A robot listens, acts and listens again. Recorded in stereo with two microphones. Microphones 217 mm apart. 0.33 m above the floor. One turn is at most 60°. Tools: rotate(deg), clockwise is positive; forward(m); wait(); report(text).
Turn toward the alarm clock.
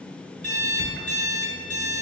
rotate(60)
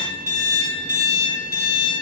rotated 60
rotate(55)
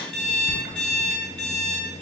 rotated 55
report("Facing the alarm clock.")